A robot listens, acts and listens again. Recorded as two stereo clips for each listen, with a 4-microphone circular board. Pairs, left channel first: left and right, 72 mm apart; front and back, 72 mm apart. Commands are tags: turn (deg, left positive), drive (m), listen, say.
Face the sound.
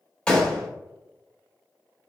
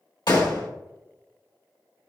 <turn deg="10"/>
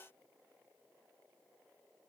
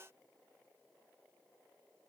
<say>Facing where the gunshot came from. I can't hear it now.</say>